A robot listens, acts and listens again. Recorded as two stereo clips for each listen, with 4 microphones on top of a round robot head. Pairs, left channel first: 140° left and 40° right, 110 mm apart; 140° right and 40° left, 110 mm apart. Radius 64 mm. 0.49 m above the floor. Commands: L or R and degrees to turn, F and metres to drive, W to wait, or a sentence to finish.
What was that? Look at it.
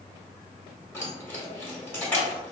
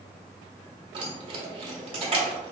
L70
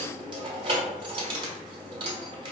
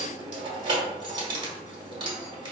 Found it: keys jangling, straight ahead, 1 to 2 m away.